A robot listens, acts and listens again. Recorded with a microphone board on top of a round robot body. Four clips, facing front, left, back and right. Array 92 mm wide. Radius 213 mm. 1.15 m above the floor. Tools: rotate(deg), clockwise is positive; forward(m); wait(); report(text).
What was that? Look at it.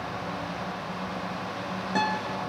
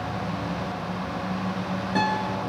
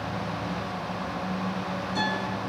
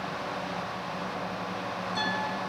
rotate(-45)
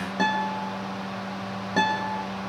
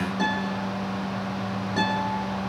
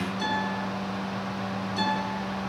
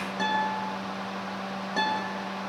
report("Facing the guitar.")